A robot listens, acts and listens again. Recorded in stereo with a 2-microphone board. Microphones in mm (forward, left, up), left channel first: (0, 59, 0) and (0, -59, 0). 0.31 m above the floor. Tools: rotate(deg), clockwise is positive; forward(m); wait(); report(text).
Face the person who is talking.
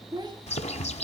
rotate(35)
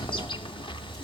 wait()
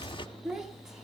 report("Facing the child speaking, 1 to 2 m away.")